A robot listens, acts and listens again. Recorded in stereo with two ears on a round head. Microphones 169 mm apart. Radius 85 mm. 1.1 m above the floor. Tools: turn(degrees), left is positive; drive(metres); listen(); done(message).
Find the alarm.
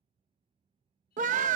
listen()
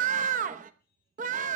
listen()
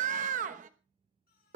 done("I can't make out an alarm, only a scream and singing.")